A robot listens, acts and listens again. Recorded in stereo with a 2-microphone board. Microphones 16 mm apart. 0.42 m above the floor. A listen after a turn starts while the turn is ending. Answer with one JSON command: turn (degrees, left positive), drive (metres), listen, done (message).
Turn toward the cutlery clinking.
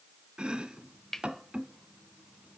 {"turn": 25}
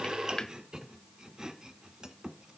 {"listen": true}
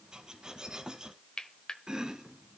{"turn": 125}
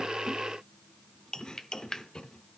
{"turn": 35}
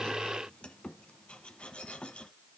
{"listen": true}
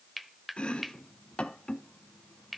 {"done": "Found it: cutlery clinking, straight ahead, 1 to 2 m away."}